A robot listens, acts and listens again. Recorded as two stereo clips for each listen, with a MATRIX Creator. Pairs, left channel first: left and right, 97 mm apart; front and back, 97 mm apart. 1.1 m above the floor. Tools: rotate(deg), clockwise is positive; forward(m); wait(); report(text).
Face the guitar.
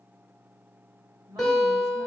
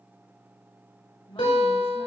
report("Facing the guitar.")